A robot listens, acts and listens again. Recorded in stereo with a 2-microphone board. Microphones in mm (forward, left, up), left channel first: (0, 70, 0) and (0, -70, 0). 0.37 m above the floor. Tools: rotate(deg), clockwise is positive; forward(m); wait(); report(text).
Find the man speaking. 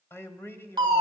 rotate(-20)
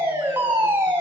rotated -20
wait()
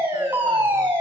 wait()
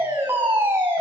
report("I heard a man speaking, but can't make it out now. It was about straight ahead or 140° left.")